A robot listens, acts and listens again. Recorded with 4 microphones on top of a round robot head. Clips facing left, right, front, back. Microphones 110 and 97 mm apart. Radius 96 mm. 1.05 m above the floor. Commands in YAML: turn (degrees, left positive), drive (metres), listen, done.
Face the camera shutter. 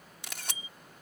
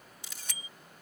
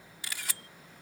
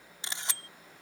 turn: 115
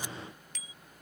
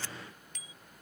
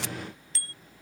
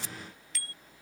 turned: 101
turn: 10
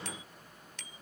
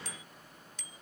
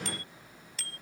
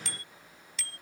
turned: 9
listen: true
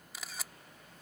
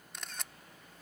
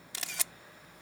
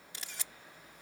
done: "Facing the camera shutter."